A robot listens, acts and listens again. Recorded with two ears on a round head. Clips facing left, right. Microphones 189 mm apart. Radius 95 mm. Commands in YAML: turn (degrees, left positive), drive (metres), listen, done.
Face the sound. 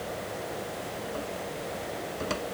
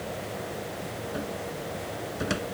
turn: -30
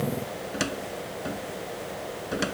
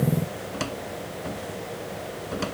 turn: 15
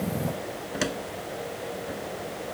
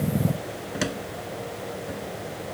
done: "Facing the cupboard door."